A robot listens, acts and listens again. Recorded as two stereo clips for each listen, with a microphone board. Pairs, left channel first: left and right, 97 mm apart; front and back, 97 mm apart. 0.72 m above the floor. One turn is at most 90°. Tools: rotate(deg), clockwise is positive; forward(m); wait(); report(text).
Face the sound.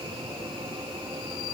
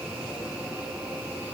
wait()
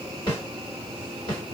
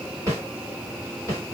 rotate(-90)
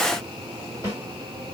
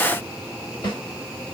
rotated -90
rotate(-40)
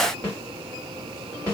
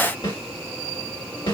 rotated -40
rotate(-20)
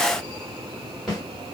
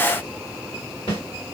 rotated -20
report("Found it: a snare drum, straight ahead, 1 to 2 m away.")